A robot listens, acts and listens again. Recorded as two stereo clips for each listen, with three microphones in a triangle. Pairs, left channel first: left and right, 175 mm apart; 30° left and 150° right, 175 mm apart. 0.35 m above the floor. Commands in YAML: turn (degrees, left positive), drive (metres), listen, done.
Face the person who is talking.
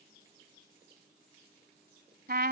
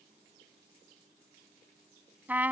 listen: true
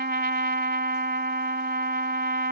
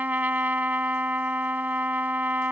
listen: true
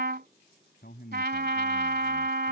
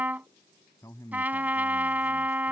turn: 100
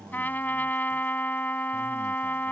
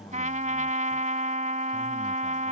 listen: true
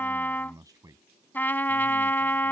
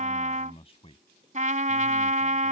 turn: -20
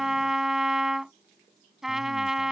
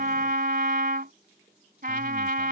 listen: true
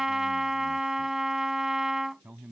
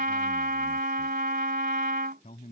turn: -10
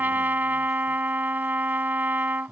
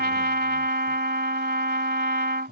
done: "Facing the man speaking."